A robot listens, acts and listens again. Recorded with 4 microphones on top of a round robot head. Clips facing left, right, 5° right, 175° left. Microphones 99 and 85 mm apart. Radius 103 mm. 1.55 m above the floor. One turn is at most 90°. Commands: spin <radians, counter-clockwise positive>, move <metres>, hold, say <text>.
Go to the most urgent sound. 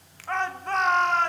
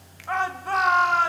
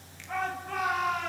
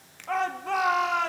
spin -1.57
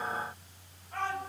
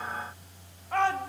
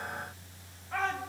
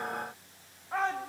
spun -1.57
spin -1.57
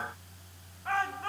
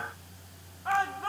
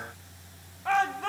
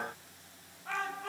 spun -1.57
spin -0.26
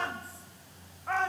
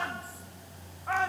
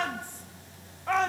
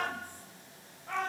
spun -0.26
move 1.0
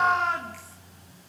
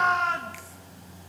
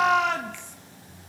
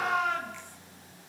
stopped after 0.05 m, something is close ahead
say Blocked. The shout is further on, straight ahead.